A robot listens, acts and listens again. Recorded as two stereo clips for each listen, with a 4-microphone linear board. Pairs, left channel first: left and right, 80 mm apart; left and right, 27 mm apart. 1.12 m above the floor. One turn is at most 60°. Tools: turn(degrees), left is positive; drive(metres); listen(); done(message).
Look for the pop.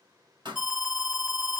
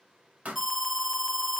turn(degrees=-60)
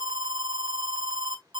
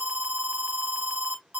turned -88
listen()
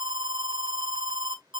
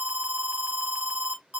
done("I heard a pop, but can't make it out now. It was about 15° left or 20° right.")